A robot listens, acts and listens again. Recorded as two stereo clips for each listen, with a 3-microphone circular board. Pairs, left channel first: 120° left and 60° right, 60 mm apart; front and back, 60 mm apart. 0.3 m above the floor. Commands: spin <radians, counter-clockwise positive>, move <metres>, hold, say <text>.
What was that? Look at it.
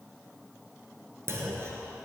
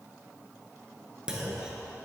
spin -1.75
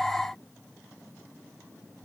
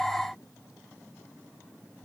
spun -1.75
say Facing where the clunk came from. I can't hear it now.